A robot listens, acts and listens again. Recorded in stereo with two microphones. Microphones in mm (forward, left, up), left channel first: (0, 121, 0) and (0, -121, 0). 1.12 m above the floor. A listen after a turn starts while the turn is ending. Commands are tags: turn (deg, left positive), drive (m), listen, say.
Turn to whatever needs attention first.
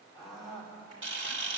<turn deg="30"/>
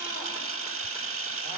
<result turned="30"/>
<listen/>
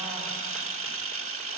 <listen/>
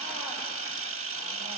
<say>I heard a scream, but can't make it out now. It was about 30° right or 150° left.</say>